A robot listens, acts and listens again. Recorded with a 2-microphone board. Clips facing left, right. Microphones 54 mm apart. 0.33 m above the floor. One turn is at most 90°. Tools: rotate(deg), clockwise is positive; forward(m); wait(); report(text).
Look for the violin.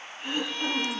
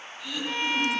rotate(45)
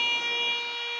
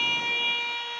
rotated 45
report("Facing the violin, 2 to 4 m away.")